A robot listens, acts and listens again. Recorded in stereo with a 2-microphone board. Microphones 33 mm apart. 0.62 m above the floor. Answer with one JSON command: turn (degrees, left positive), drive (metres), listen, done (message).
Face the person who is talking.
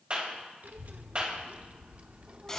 {"turn": -35}
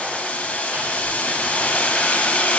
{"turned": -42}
{"listen": true}
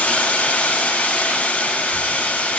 {"listen": true}
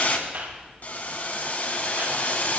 {"turn": 70}
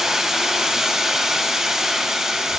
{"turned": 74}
{"listen": true}
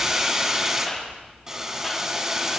{"done": "Facing the child speaking."}